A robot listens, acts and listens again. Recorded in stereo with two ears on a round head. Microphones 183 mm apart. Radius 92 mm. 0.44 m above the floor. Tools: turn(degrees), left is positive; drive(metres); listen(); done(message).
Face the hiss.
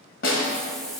turn(degrees=30)
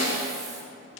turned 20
listen()
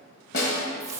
turn(degrees=-15)
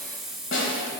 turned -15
done("Facing the hiss.")